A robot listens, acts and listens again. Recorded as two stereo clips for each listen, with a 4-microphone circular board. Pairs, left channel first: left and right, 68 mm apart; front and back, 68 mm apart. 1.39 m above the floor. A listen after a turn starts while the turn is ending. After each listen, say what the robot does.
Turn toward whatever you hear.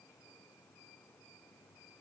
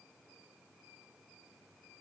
Keep listening.
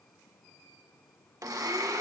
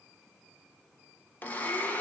Turn 60° right.
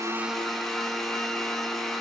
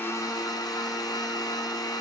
Found it: a blender, straight ahead, 1 to 2 m away.